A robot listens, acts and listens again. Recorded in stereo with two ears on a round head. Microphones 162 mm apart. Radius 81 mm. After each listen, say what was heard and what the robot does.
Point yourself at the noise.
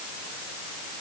Keep listening.
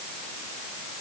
Keep listening.
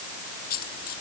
The dropped coin: about 55° left or 125° left. Turn 55° left.
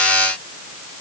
Keep listening.
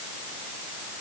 I heard a dropped coin, but can't make it out now. It was about straight ahead or 70° left.